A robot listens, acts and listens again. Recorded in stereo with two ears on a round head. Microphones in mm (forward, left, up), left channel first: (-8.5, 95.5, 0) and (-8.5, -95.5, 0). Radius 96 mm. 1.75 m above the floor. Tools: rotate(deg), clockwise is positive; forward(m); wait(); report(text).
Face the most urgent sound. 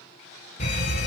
rotate(-35)
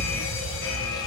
rotate(-110)
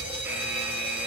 rotate(10)
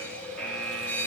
report("Facing the fire alarm.")